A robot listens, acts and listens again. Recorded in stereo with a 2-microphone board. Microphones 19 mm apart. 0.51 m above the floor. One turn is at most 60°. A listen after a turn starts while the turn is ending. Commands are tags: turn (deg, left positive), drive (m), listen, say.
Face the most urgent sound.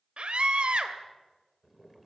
<turn deg="-60"/>
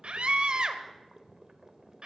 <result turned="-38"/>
<turn deg="-60"/>
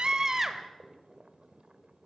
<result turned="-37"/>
<turn deg="-25"/>
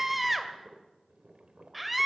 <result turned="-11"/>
<turn deg="-10"/>
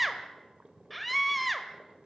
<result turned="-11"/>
<say>Facing the scream.</say>